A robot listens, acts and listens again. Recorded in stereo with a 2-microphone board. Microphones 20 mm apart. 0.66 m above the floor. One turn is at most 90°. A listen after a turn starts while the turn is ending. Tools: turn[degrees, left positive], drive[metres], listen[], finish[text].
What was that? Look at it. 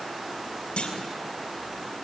Thought: The clunk: about 70° left or 110° left.
Action: turn[70]
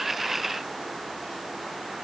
Action: listen[]
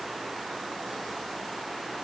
Action: finish[I heard a clunk, but can't make it out now. It was about straight ahead or 40° left.]